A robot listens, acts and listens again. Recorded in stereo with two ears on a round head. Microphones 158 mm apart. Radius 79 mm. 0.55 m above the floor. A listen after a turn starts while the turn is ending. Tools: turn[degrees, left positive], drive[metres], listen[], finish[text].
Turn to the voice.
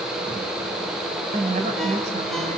Thought: The woman speaking: about 45° right or 135° right.
Action: turn[-45]
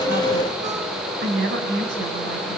Thought: So it is at 100° right.
Action: turn[-100]
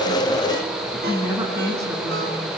Thought: The woman speaking is now 20° right.
Action: turn[-20]
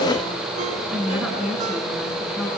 Action: finish[Facing the woman speaking, over 4 m away.]